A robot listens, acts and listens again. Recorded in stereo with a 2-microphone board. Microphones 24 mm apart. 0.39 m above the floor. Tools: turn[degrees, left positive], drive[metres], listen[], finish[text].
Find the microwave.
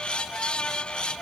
Action: listen[]
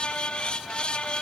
Action: listen[]
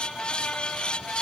Action: finish[I can't make out a microwave to turn to.]